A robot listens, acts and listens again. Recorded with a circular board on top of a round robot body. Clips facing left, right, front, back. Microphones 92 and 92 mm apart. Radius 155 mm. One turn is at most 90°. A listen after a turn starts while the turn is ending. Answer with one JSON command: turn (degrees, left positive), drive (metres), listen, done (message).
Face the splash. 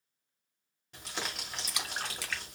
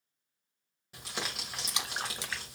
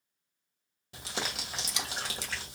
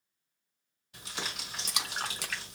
{"turn": -90}
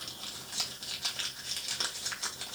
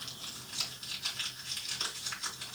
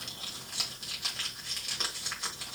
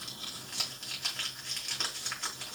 {"turn": -65}
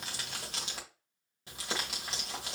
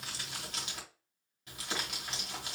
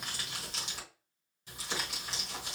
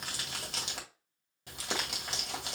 {"done": "Facing where the splash came from. I can't hear it now."}